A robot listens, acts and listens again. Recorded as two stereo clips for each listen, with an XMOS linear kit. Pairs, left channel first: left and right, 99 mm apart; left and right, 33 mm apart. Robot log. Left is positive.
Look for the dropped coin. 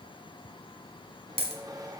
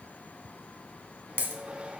note: The dropped coin: about 70° right or 110° right.
cmd yaw -70
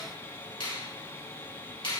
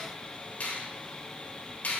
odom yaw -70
cmd idle
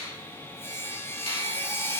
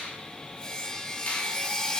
end: I heard a dropped coin, but can't make it out now. It was about straight ahead or 40° right.